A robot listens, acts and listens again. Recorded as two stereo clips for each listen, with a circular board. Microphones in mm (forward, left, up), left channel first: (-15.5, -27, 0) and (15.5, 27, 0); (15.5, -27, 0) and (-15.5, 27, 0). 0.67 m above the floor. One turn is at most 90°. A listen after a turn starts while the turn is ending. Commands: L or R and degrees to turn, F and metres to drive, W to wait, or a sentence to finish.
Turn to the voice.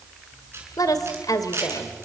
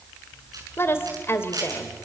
R90
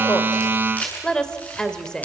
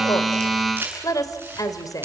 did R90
R40
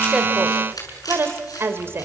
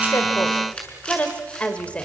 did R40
L10
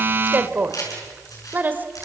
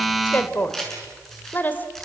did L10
Facing the woman speaking, 2 to 4 m away.